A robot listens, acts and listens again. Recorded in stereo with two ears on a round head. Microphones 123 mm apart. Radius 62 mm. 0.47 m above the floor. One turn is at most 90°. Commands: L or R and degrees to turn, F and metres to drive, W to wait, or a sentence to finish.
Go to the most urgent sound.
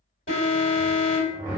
L55
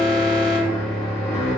L45
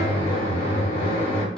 W
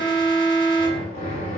F1.0
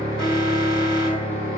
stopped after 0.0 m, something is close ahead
Blocked. The alarm is further on, straight ahead.